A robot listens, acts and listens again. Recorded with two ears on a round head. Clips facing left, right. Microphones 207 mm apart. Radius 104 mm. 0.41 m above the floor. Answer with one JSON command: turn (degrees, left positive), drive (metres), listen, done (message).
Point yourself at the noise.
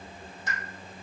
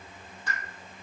{"turn": 15}
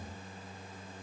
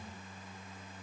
{"listen": true}
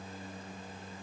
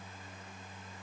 {"done": "I heard a pop, but can't make it out now. It was about straight ahead or 150° left."}